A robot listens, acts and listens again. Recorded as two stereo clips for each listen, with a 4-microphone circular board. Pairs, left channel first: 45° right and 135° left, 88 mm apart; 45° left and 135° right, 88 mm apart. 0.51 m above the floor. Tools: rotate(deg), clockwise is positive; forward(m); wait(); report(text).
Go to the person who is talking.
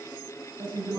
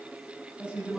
rotate(-145)
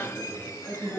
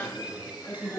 rotate(25)
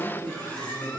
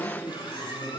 forward(1.0)
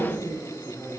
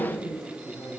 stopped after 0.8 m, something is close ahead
report("Something is in my way. I am facing the man speaking but have not reached it.")